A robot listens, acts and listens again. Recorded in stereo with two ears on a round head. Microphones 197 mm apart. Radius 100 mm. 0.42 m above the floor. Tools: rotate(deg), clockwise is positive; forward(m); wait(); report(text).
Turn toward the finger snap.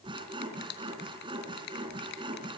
rotate(-50)
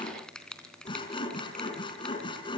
report("Facing the finger snap.")